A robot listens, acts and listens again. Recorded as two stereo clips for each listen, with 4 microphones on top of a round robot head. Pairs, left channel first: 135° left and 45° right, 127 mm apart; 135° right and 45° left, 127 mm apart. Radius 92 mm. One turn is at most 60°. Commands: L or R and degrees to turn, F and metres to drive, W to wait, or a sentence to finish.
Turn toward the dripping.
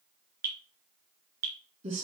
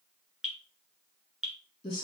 R45
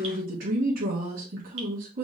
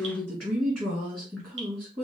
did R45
W
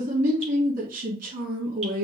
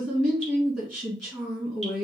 W
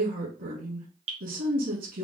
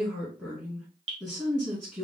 Found it: dripping, straight ahead.